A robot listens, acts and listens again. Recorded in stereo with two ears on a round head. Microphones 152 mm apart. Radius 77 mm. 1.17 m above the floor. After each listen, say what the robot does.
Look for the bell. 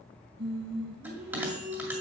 Turn 30° right.
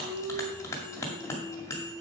Turn 15° left.
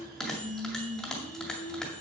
Facing the bell.